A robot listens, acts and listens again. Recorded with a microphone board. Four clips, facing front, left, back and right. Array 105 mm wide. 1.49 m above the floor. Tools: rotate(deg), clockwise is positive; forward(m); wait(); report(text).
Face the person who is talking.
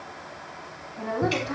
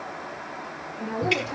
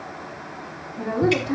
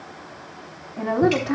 rotate(85)
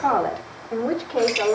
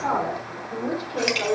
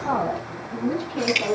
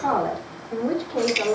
report("Facing the woman speaking, over 4 m away.")